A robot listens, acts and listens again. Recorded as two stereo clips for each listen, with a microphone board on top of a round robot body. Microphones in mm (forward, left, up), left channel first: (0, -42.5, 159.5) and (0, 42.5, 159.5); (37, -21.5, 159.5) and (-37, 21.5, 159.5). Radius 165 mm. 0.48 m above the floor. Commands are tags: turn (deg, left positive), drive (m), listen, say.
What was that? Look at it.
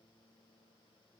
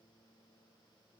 <listen/>
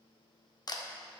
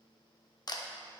<turn deg="-60"/>
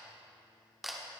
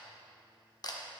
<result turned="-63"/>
<say>Found it: a camera shutter, straight ahead.</say>